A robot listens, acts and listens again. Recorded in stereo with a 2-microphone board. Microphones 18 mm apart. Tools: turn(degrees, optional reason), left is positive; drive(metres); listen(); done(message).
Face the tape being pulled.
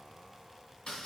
listen()
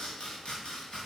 listen()
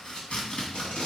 turn(degrees=90)
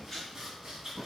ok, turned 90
done("Facing the tape being pulled.")